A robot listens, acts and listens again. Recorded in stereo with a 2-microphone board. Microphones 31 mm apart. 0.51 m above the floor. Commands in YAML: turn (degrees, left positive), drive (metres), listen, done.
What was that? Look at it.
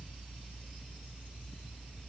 listen: true
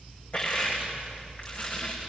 turn: 45
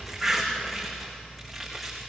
done: "Facing the crushing, over 4 m away."